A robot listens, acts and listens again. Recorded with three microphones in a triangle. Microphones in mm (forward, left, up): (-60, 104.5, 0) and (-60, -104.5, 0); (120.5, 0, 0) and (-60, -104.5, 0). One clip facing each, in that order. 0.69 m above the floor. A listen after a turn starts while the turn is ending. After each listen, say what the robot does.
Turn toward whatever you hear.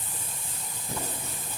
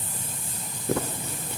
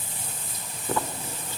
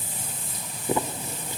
Turn 75° right.
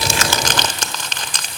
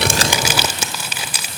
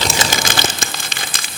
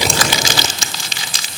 Turn 10° right.
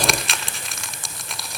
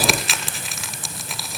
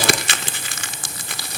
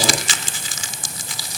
Found it: crumpling, straight ahead, under 1 m away.